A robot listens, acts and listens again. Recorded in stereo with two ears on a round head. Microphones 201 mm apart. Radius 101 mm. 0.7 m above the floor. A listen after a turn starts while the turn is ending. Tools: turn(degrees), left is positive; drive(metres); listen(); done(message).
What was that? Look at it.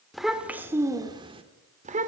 turn(degrees=-35)
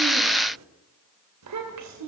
turn(degrees=-100)
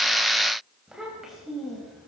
done("Found it: a child speaking, straight ahead, 2 to 4 m away.")